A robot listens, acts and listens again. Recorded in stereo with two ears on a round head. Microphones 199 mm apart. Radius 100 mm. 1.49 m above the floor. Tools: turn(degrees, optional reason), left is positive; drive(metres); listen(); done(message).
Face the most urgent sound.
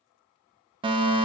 turn(degrees=-25, reason="The fire alarm: about 25° right or 155° right.")
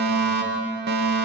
turn(degrees=-130, reason="So it is at 130° right.")
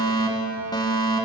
turn(degrees=20, reason="The fire alarm is now 20° left.")
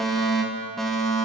done("Found it: a fire alarm, straight ahead, 2 to 4 m away.")